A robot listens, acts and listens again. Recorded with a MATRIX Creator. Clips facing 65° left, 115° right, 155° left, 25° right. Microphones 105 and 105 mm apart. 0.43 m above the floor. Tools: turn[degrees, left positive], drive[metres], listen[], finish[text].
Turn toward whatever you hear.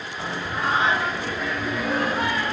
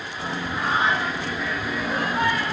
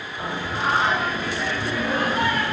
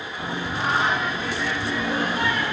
Thought: The singing: 110° left.
Action: turn[110]
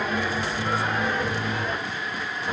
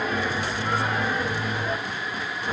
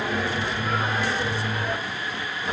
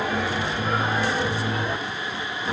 Thought: The singing is now 50° right.
Action: turn[-50]
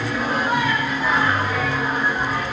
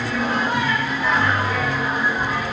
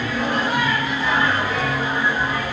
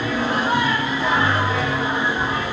Thought: The singing is now 10° right.
Action: turn[-10]
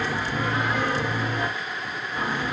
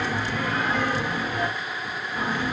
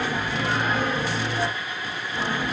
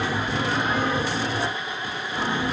Action: finish[Found it: singing, straight ahead, 1 to 2 m away.]